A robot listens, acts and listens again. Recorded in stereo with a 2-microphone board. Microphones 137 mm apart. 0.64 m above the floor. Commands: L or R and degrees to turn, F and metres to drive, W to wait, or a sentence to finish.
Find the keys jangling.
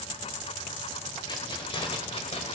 L50
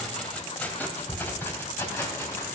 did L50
L20
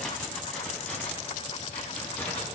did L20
L15
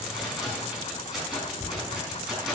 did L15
Found it: keys jangling, straight ahead, over 4 m away.